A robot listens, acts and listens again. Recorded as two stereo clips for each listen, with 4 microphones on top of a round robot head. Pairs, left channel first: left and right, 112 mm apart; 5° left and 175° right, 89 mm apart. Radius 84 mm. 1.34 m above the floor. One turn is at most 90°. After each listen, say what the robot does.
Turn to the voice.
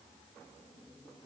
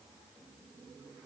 Keep listening.
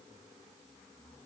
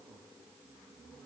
Keep listening.
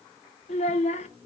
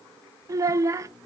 Turn 90° left.
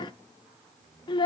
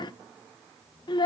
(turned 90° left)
Turn 40° left.
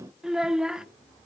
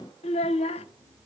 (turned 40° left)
Facing the child speaking.